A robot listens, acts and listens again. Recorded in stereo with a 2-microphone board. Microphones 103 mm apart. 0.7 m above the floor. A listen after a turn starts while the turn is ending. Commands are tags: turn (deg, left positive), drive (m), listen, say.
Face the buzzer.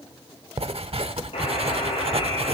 <turn deg="70"/>
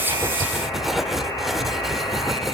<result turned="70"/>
<turn deg="40"/>
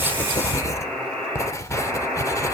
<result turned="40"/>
<turn deg="10"/>
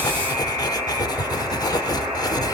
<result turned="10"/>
<say>Facing the buzzer, over 4 m away.</say>